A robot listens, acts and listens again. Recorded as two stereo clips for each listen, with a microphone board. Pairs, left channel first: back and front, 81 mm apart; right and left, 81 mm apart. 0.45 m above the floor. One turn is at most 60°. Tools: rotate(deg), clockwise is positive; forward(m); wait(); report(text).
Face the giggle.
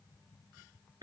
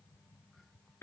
wait()
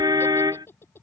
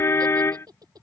rotate(-60)
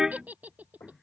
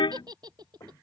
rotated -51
rotate(-60)
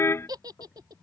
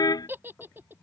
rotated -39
rotate(-30)
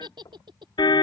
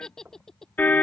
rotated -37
report("Found it: a giggle, straight ahead.")